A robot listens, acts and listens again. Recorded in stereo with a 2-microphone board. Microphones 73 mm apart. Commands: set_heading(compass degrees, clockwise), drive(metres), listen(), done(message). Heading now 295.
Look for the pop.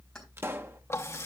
set_heading(330)
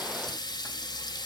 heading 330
listen()
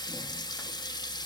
done("I heard a pop, but can't make it out now. It was about straight ahead or 110° right.")